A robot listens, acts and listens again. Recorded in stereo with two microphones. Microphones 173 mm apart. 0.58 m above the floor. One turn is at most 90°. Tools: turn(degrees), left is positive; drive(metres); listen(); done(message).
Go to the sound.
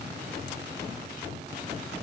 listen()
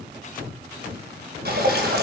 turn(degrees=-65)
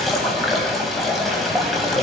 drive(metres=1.0)
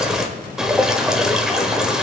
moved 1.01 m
drive(metres=1.0)
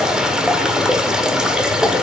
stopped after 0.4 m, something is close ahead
done("I am next to the dripping.")